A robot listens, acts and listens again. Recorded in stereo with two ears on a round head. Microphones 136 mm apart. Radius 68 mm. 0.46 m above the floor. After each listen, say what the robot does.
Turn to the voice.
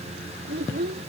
Turn 90° right.
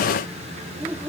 Turn 10° right.
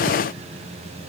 Keep listening.
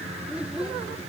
Found it: a child speaking, straight ahead.